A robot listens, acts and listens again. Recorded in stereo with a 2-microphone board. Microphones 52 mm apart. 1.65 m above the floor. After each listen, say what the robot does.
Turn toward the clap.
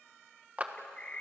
Turn 30° right.
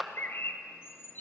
Found it: a clap, straight ahead, 1 to 2 m away.